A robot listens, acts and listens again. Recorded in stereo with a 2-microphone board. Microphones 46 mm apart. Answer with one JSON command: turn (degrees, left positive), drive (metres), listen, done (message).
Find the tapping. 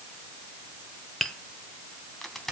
{"turn": 30}
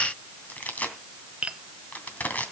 {"turn": -25}
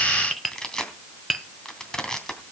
{"done": "Found it: tapping, straight ahead."}